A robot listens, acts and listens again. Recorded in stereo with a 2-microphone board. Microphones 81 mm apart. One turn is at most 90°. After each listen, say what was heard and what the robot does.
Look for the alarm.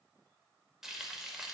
Keep listening.
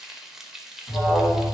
The alarm: about 65° left or 115° left. Turn 65° left.
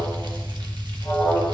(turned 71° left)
So it is at 20° left. Turn 20° left.
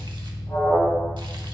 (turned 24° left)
Found it: an alarm, straight ahead.